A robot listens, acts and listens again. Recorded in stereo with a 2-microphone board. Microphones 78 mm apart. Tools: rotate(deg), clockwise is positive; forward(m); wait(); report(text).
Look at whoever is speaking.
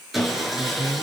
rotate(35)
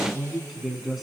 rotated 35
report("Facing the man speaking, 2 to 4 m away.")